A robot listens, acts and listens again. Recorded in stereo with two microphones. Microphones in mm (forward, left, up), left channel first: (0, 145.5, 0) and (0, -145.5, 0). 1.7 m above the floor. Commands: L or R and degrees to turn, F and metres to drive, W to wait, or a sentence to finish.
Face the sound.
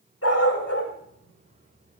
L55
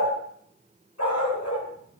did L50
L75
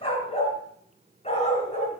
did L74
L25
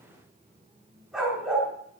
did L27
Facing the dog barking, over 4 m away.